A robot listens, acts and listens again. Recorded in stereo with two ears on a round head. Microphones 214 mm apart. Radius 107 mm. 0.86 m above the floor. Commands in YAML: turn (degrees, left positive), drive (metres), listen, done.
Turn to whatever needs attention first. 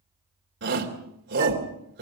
turn: -50
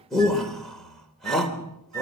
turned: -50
done: "Found it: a shout, straight ahead, 2 to 4 m away."